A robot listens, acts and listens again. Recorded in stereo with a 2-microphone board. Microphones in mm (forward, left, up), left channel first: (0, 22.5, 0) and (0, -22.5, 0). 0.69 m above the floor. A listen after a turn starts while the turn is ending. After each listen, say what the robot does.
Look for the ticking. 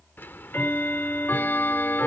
Turn 50° left.
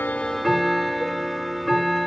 Facing the ticking.